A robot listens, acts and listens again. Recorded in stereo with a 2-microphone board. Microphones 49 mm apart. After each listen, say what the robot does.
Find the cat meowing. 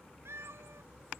Turn 65° right.
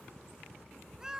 Turn 15° right.
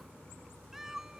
Turn 10° right.
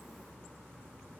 Keep listening.
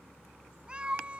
Turn 25° right.
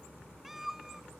Facing the cat meowing.